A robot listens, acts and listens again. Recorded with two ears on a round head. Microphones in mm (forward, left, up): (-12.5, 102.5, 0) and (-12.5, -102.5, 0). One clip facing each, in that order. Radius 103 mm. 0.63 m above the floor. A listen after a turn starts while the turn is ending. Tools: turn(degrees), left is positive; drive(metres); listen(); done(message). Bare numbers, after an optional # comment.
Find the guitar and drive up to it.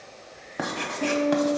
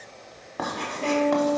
# The guitar: about 75° left or 105° left.
turn(75)
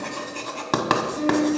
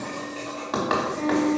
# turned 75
drive(1.0)
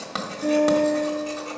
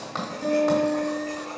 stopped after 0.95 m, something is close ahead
done("I am next to the guitar.")